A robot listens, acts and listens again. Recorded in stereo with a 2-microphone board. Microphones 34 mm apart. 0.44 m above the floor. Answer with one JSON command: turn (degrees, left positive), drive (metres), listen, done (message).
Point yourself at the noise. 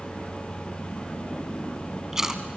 {"turn": -30}
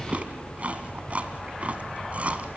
{"turn": -135}
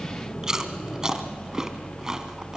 {"turn": -15}
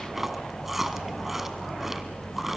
{"turn": -10}
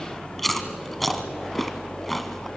{"done": "Facing the chewing, 1 to 2 m away."}